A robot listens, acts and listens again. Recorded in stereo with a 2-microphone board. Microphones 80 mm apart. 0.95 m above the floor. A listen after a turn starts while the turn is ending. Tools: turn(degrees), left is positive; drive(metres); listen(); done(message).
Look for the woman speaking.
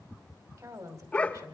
turn(degrees=-50)
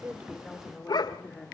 done("Facing the woman speaking.")